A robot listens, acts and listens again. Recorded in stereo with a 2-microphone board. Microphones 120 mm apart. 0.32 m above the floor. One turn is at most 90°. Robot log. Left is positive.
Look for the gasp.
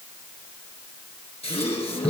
note: The gasp: about 55° left or 125° left.
cmd yaw +55
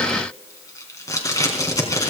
cmd idle
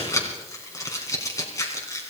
end: I heard a gasp, but can't make it out now. It was about straight ahead or 70° left.